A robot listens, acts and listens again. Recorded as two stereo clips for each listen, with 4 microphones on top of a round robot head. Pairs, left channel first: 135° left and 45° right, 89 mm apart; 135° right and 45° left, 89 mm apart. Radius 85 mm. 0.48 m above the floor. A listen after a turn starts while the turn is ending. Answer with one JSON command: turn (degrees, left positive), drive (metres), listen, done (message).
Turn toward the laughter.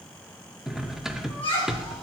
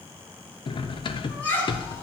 {"turn": 155}
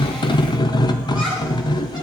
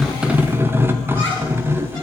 {"listen": true}
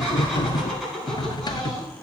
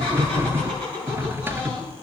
{"turn": 45}
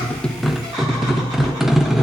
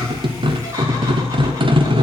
{"listen": true}
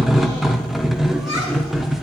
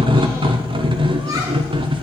{"listen": true}
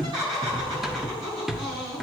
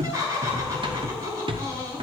{"turn": -15}
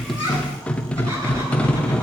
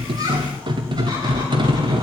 {"listen": true}
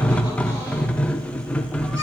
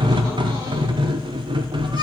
{"listen": true}
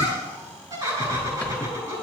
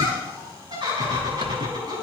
{"done": "Facing the laughter, over 4 m away."}